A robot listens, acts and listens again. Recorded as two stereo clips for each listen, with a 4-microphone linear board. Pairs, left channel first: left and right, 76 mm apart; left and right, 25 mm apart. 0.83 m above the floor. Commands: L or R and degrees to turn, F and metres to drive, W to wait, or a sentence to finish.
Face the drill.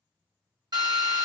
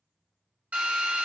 R70
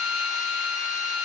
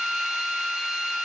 R20
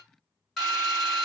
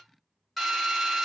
Found it: a drill, straight ahead, 2 to 4 m away.